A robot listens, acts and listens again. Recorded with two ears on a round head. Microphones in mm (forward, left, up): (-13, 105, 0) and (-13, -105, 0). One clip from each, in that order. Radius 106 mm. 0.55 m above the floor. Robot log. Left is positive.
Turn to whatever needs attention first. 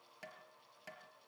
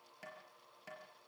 cmd idle
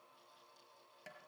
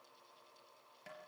cmd idle
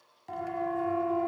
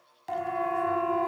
note: The siren: about 35° right or 145° right.
cmd yaw -35
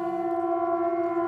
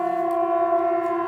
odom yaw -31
note: So it is at 115° right.
cmd yaw -115
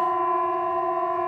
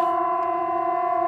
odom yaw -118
end: Facing the siren, over 4 m away.